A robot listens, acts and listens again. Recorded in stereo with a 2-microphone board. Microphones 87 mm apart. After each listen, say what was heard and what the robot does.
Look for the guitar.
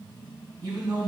Keep listening.
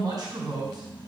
Keep listening.
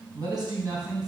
I can't make out a guitar, only a man speaking.